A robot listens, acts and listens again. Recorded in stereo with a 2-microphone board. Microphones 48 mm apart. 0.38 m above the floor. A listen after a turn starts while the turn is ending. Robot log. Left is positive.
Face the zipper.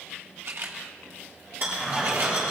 cmd yaw -30
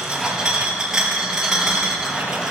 note: So it is at 20° left.
cmd yaw +20
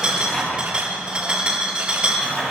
note: The zipper is now 10° left.
cmd yaw +10
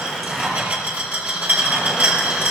end: Found it: a zipper, straight ahead.